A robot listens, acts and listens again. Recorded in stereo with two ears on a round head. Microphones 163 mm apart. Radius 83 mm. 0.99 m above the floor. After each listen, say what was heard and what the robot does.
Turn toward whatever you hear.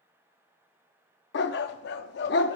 The dog barking: about 60° left or 120° left. Turn 60° left.
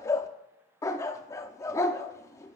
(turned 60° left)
So it is at 15° left. Turn 15° left.
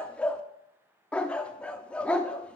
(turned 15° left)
Facing the dog barking, under 1 m away.